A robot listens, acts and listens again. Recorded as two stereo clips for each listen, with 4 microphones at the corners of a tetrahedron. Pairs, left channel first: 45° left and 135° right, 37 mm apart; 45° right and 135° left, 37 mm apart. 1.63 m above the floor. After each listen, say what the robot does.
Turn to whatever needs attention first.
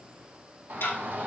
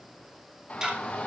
Turn 100° right.
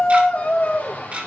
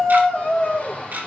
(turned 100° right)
Turn 10° left.
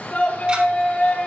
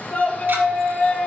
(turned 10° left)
Facing the shout.